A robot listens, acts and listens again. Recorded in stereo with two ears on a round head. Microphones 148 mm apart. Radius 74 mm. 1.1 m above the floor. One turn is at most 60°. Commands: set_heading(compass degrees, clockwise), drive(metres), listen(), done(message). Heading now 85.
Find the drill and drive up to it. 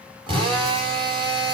set_heading(115)
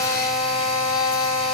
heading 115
drive(1.0)
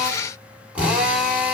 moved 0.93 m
set_heading(125)
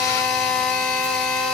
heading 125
drive(1.0)
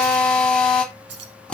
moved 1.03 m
drive(1.0)
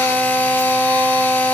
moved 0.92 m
set_heading(115)
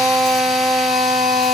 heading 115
drive(1.0)
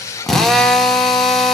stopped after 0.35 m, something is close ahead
done("Arrived at the drill, straight ahead.")